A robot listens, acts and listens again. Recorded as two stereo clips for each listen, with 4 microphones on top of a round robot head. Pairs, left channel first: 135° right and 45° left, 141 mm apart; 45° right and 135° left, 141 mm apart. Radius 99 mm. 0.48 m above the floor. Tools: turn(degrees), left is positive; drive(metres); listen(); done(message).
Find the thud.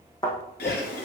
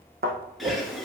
turn(degrees=160)
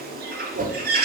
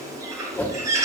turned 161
done("I heard a thud from this way, but can't make it out now.")